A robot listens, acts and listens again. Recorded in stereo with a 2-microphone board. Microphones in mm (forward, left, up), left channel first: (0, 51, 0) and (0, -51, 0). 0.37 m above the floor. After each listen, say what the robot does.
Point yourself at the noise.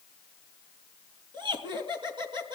Turn 50° right.
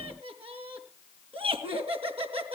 Turn 75° right.
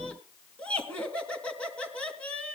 Turn 10° left.
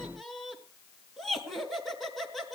Found it: laughter, straight ahead, 2 to 4 m away.